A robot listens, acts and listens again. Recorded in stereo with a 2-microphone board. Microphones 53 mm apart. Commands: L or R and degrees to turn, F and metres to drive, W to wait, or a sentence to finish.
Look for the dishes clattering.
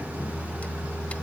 W
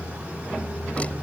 W
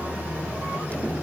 I can't make out dishes clattering.